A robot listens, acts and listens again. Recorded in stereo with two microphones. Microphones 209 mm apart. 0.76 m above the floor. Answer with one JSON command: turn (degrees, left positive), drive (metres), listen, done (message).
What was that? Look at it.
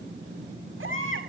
{"turn": -90}
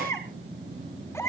{"turn": 15}
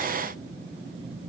{"listen": true}
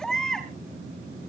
{"done": "Facing the baby crying, over 4 m away."}